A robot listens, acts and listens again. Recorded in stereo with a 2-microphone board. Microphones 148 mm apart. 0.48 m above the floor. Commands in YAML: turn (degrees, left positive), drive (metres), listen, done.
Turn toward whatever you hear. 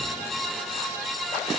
listen: true
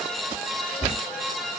turn: 30
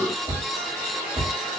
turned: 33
turn: -35
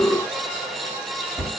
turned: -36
done: "Found it: a cupboard door, straight ahead."